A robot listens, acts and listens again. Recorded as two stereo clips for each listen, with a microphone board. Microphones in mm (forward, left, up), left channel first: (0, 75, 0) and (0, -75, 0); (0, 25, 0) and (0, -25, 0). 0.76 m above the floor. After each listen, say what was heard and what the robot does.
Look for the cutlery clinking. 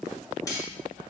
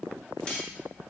The cutlery clinking: about 25° left or 155° left. Turn 25° left.
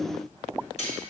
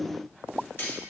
So it is at 130° left. Turn 130° left.
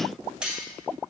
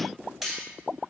Found it: cutlery clinking, straight ahead.